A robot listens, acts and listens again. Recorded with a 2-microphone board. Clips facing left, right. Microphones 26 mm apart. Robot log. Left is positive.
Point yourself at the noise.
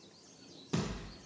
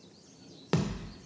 cmd yaw -90
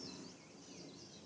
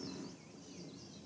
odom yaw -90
end: I heard a thud from this way, but can't make it out now.